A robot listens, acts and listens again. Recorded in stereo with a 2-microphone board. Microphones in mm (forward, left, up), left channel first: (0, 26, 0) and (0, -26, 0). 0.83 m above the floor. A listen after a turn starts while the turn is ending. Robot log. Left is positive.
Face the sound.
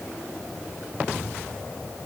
cmd idle
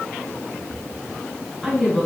cmd yaw +30
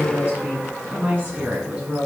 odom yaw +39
note: So it is at 25° right.
cmd yaw -25
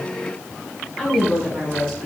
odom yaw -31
note: The woman speaking is now 10° left.
cmd yaw +10
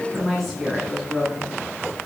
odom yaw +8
end: Found it: a woman speaking, straight ahead, over 4 m away.